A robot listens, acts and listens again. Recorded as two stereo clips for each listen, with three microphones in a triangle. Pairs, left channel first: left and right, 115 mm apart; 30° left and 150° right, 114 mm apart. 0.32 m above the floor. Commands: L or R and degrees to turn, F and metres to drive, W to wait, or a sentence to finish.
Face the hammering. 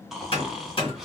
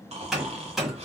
L125
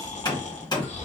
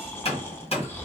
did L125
L45
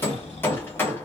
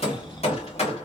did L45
L20
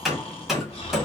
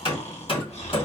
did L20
Found it: hammering, straight ahead.